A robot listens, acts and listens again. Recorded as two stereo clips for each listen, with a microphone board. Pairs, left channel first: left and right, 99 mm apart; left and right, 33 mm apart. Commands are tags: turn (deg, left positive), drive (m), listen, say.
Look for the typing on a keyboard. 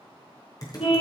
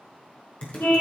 <turn deg="40"/>
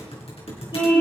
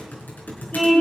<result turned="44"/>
<turn deg="100"/>
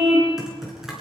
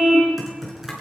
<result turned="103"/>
<say>Found it: typing on a keyboard, straight ahead.</say>